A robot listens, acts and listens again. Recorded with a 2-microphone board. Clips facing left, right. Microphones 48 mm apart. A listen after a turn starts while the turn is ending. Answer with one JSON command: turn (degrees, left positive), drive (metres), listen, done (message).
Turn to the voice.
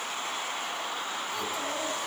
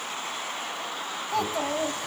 {"turn": -65}
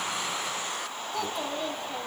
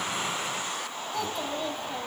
{"done": "Found it: a child speaking, straight ahead, over 4 m away."}